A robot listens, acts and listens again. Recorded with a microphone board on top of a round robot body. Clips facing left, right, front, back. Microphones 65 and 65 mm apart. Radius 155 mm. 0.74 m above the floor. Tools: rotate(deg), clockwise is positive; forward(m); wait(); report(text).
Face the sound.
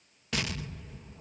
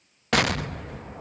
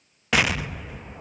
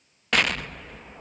rotate(85)
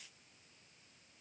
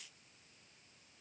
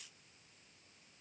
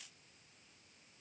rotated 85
report("I heard an explosion from this way, but can't make it out now.")